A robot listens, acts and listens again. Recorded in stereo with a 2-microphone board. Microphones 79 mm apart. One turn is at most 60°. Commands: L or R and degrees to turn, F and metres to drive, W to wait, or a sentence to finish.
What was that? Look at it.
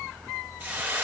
R25
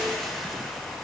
Facing the hiss.